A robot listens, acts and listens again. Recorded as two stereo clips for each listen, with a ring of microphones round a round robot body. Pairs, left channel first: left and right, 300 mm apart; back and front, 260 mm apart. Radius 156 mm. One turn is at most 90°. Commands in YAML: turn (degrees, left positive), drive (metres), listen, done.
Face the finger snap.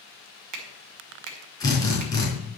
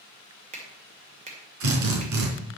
turn: -65
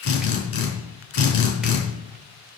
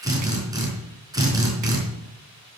listen: true
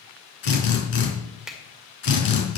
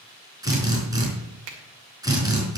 done: "Facing the finger snap, 2 to 4 m away."